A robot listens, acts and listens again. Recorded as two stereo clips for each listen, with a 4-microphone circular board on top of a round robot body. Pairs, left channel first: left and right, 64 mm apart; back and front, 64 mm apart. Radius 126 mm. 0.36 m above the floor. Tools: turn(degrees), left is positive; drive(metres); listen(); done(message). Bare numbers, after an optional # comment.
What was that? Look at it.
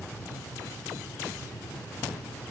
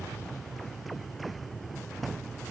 listen()
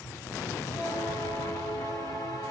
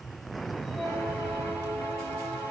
# The bell: 120° left.
turn(120)
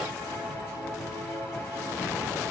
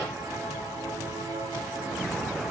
# The bell is now 30° left.
turn(30)
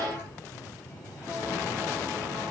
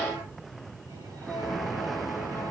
listen()
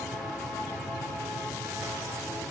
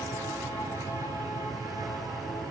listen()
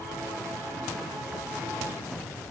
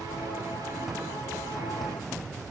done("Facing where the bell came from. I can't hear it now.")